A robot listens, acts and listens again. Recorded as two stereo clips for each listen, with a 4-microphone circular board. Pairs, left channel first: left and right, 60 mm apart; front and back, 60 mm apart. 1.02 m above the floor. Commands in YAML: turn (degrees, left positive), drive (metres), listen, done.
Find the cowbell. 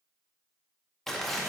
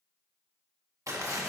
listen: true
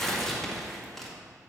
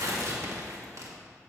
listen: true
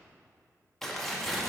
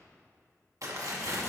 done: "I can't make out a cowbell to turn to."